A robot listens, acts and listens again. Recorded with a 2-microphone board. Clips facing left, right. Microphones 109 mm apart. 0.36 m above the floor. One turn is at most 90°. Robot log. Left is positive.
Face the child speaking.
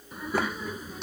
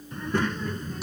cmd yaw +30
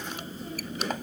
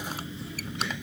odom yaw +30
note: So it is at 140° left.
cmd yaw +90
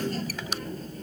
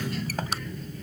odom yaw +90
note: The child speaking is now 40° left.
cmd yaw +40
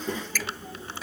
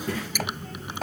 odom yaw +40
note: The child speaking is now 15° left.
cmd yaw +15
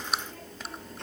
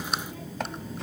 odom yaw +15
end: Found it: a child speaking, straight ahead.